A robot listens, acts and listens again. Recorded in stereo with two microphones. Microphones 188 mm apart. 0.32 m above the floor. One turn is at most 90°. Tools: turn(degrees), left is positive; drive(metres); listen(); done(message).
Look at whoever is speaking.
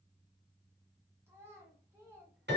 turn(degrees=-30)
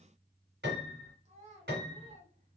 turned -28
turn(degrees=-90)
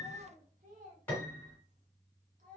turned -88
turn(degrees=-50)
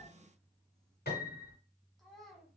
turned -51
done("Facing the child speaking.")